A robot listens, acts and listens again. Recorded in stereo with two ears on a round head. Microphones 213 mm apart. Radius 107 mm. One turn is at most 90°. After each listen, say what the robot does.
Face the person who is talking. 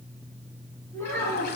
Turn 30° left.
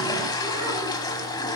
Keep listening.
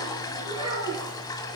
Turn 25° right.
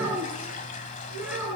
Turn 10° right.
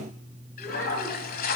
Keep listening.
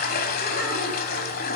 Keep listening.
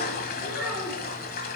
Facing the child speaking.